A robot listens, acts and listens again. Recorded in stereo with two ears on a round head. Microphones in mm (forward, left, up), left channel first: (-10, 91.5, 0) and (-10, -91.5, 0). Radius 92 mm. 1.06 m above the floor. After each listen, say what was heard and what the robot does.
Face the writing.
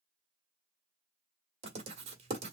The writing: about 30° right or 150° right. Turn 30° right.
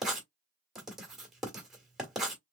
Facing the writing, 1 to 2 m away.